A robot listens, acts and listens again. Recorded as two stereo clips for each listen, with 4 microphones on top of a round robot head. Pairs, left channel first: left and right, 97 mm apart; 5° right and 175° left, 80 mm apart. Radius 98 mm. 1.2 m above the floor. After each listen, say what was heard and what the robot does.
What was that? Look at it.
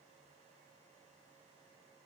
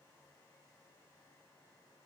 Keep listening.
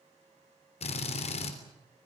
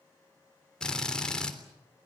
The drill: 75° left. Turn 75° left.
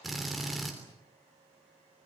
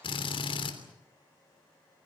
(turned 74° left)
Facing the drill.